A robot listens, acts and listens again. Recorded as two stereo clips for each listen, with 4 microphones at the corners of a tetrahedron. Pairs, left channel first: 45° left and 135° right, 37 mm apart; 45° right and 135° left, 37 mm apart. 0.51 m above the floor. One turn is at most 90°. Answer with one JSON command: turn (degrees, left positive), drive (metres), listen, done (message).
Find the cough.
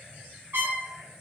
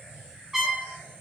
{"listen": true}
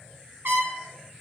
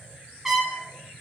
{"listen": true}
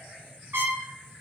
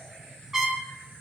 {"done": "I can't make out a cough, only a trumpet."}